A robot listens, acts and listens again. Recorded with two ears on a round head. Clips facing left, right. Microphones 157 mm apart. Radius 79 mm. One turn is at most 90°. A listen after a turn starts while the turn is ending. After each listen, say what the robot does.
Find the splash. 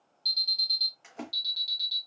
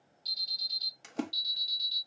Turn 45° right.
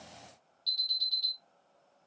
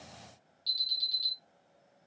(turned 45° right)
Keep listening.
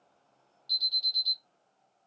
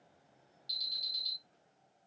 I heard a splash, but can't make it out now. It was about straight ahead or 90° right.